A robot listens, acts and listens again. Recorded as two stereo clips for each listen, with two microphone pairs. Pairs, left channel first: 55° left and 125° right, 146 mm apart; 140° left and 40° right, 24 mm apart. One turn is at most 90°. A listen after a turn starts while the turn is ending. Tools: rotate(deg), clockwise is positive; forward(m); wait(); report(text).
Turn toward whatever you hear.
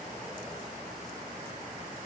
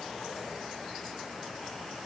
wait()
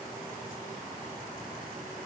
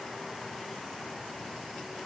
wait()
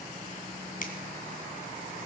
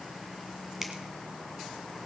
rotate(-35)
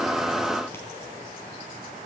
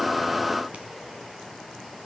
wait()
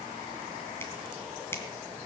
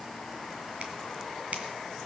rotate(20)
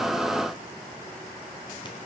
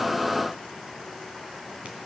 wait()
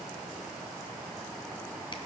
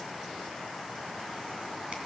wait()
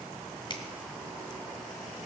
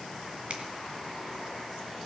report("Facing the finger snap.")